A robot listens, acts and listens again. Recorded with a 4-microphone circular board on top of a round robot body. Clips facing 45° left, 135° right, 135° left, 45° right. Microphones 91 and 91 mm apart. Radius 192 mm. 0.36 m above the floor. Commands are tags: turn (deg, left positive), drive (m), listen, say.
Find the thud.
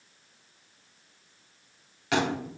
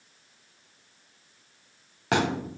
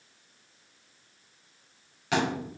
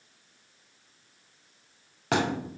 <turn deg="-85"/>
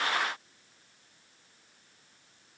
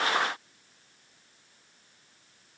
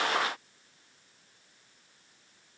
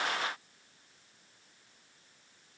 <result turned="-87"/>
<say>Facing where the thud came from. I can't hear it now.</say>